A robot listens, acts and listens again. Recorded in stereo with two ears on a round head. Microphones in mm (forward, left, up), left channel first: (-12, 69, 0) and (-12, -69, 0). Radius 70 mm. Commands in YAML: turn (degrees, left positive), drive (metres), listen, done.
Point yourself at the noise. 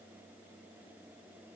listen: true
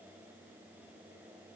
listen: true
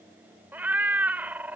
turn: -30
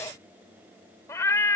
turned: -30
turn: 20
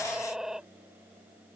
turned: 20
done: "Found it: a cat meowing, straight ahead."